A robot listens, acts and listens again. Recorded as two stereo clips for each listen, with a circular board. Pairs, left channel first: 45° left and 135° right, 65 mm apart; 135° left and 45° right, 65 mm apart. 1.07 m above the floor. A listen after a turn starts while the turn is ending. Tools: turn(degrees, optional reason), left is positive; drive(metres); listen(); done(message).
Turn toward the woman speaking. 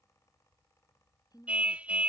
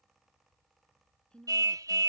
turn(degrees=60, reason="The woman speaking: 60° left.")
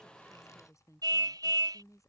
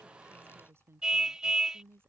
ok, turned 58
done("Facing the woman speaking.")